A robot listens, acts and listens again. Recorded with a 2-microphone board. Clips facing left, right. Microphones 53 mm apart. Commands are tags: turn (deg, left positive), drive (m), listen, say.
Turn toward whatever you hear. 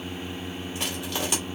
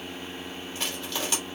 <turn deg="30"/>
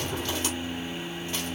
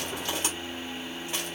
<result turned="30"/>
<listen/>
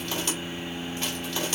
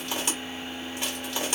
<turn deg="-15"/>
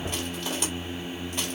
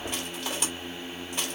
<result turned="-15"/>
<say>Found it: crushing, straight ahead.</say>